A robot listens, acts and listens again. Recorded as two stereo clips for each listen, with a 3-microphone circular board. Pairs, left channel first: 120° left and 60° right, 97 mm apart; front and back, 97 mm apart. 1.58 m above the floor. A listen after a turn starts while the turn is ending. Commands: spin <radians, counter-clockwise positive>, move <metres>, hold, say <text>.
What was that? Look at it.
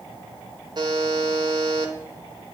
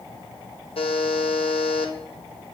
spin -0.35
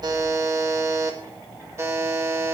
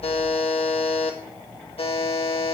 say Found it: a buzzer, straight ahead, 1 to 2 m away.